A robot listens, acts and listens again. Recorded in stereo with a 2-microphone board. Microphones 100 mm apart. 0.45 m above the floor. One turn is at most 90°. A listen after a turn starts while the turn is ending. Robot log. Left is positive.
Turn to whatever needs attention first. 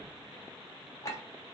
cmd idle
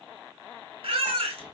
note: The baby crying: about 75° right or 105° right.
cmd yaw -75
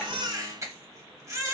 note: So it is at 30° right.
cmd yaw -30
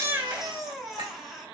end: Found it: a baby crying, straight ahead.